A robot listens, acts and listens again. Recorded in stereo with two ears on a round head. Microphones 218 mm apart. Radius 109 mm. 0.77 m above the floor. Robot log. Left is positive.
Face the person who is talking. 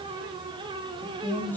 cmd yaw +30
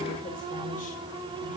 cmd idle
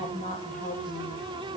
note: So it is at 145° left.
cmd yaw +145
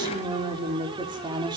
note: The woman speaking is now 15° right.
cmd yaw -15
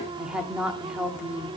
end: Found it: a woman speaking, straight ahead.